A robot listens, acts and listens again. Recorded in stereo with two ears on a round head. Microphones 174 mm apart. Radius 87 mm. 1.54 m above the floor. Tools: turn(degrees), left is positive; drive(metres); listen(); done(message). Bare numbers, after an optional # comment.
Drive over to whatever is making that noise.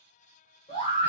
# The scream: about 30° left or 150° left.
turn(30)
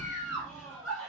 drive(1.0)
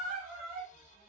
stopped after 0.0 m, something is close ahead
done("Blocked. The scream is further on, straight ahead.")